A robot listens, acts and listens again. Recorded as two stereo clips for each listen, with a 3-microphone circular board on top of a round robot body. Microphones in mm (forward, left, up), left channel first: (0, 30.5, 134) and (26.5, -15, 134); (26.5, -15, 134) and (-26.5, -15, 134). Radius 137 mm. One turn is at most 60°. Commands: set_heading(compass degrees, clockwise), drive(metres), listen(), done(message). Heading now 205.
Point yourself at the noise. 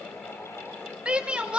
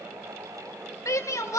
set_heading(195)
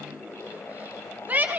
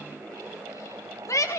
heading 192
done("Found it: a shout, straight ahead, 2 to 4 m away.")